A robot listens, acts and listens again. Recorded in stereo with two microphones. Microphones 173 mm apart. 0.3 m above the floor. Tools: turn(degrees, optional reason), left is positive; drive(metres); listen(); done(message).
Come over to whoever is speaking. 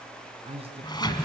turn(degrees=-35, reason="The man speaking: about 35° right or 145° right.")
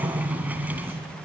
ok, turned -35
listen()
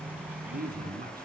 turn(degrees=-105, reason="So it is at 105° right.")
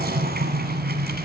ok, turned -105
listen()
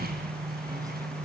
listen()
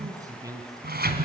turn(degrees=-20, reason="The man speaking is now 20° right.")
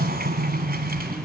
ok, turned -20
listen()
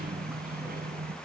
listen()
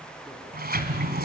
done("I heard a man speaking from this way, but can't make it out now. I did not reach it.")